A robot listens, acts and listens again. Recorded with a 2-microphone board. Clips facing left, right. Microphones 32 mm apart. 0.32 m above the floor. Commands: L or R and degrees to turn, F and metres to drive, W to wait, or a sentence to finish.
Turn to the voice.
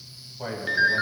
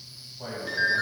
L35
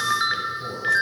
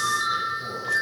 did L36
W
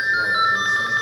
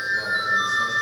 W
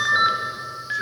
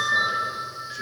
I heard a man speaking, but can't make it out now. It was about 5° right or 110° left.